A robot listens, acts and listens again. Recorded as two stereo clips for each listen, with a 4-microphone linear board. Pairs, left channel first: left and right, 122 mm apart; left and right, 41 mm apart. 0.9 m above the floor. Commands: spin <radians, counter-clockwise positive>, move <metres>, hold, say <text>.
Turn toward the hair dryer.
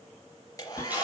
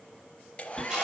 spin 0.52
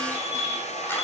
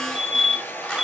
spin 2.01
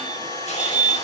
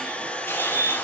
spin 0.61
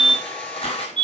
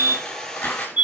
spin 0.17
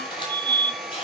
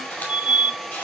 say Found it: a hair dryer, straight ahead, over 4 m away.